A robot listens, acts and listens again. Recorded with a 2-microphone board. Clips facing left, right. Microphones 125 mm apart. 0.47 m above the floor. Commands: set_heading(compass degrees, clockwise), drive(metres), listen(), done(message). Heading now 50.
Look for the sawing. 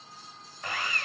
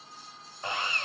set_heading(75)
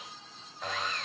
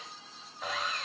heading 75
done("Found it: sawing, straight ahead.")